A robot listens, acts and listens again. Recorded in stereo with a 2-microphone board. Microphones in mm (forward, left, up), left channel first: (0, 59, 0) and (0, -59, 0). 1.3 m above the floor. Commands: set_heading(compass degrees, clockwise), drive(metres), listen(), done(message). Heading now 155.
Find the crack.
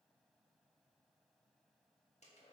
listen()
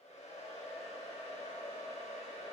listen()
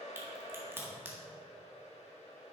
set_heading(175)
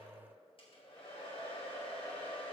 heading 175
listen()
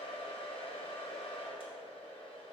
done("I heard a crack, but can't make it out now. It was about straight ahead or 140° right.")